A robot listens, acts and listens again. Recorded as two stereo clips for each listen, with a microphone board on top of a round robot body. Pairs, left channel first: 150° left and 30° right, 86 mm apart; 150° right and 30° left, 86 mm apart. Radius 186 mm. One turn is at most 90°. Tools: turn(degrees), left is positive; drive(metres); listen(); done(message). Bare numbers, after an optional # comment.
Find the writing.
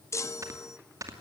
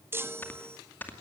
listen()
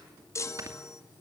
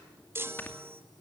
listen()
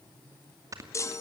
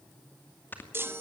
done("I can't make out writing, only a chime and snoring.")